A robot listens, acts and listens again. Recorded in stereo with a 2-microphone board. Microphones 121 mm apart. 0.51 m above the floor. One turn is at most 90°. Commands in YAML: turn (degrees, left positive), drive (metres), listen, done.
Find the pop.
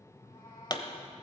turn: 40
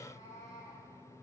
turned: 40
listen: true
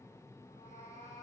done: "I heard a pop, but can't make it out now. It was about straight ahead or 100° left."